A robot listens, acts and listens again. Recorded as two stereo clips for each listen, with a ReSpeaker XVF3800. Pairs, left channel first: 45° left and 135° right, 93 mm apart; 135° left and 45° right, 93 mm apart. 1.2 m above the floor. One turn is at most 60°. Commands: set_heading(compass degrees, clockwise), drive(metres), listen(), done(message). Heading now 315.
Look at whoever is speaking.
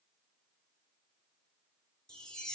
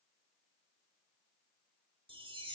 listen()
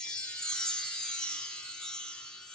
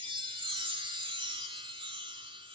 listen()
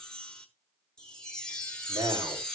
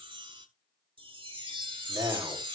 set_heading(15)
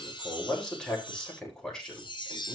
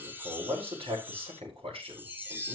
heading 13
set_heading(53)
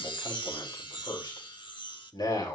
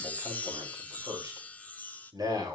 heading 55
done("Found it: a man speaking, straight ahead, over 4 m away.")